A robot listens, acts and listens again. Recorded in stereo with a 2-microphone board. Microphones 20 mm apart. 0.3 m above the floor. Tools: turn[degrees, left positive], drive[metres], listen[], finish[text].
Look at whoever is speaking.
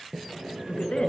Thought: The woman speaking: about 70° left or 110° left.
Action: turn[70]
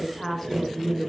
Thought: So it is at 15° left.
Action: turn[15]
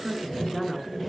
Action: finish[Facing the woman speaking, over 4 m away.]